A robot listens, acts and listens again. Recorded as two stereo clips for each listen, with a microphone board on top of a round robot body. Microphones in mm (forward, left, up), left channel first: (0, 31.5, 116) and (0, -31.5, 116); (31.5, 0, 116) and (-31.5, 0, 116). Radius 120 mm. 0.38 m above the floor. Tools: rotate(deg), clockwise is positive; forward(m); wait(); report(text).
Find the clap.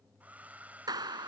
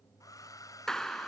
rotate(80)
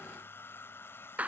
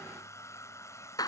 rotate(20)
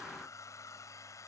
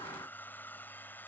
wait()
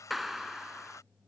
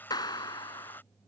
report("Facing the clap.")